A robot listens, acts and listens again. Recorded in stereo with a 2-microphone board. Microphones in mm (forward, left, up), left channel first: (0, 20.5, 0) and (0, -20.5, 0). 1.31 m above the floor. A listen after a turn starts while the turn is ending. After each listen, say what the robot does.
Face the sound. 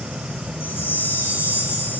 Turn 90° left.
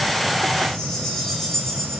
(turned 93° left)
Turn 15° left.
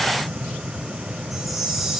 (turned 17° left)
Keep listening.
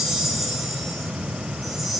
Facing the chime.